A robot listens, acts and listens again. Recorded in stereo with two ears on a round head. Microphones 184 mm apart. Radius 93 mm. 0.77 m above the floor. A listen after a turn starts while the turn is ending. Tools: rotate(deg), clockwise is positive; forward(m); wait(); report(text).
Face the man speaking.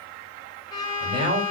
rotate(25)
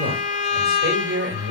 rotate(130)
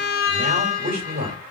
rotate(50)
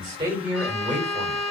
rotate(10)
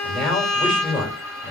report("Found it: a man speaking, straight ahead, 2 to 4 m away.")